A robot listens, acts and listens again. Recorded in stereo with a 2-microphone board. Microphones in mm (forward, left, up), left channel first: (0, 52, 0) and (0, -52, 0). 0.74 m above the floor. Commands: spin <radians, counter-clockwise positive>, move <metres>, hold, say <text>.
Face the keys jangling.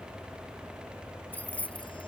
spin 0.52
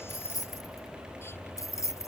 spin 2.62
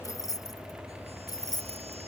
spin 0.70
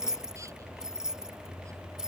say Facing the keys jangling.